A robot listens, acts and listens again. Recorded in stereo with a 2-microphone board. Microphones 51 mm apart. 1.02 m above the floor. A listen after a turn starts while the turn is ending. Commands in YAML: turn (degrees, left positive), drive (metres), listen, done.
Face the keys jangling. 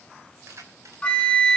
turn: -75
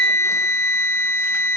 listen: true
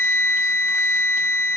listen: true
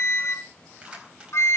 turn: -20
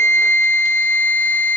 listen: true
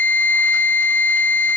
listen: true
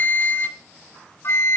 done: "Facing where the keys jangling came from. I can't hear it now."